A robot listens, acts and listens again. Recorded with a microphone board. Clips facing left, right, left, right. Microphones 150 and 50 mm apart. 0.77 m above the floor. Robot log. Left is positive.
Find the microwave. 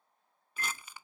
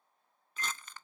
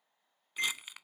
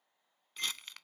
note: The microwave: about 50° left or 130° left.
cmd yaw +50
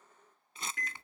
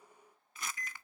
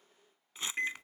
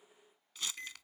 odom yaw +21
note: So it is at 105° left.
cmd yaw +105
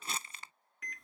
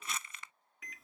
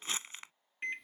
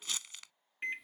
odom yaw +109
end: Facing the microwave.